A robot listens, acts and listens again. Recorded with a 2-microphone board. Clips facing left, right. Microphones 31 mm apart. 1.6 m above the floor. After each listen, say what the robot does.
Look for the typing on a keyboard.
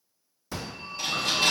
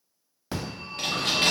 Turn 60° right.
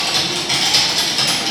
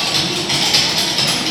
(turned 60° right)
Turn 10° right.
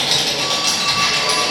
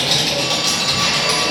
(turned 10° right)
Found it: typing on a keyboard, straight ahead, under 1 m away.